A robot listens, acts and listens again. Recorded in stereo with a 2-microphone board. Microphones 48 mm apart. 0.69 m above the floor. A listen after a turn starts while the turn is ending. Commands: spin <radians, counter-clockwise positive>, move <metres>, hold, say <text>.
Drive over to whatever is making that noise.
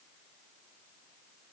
hold
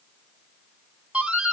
spin -0.26
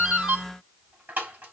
spin -2.62
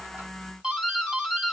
spin -0.35
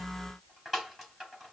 move 1.0
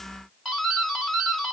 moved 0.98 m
spin -0.17
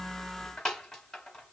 move 1.0
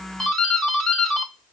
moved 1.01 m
spin 0.17
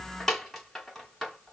move 1.0
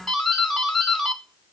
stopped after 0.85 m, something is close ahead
say Arrived at the doorbell, straight ahead.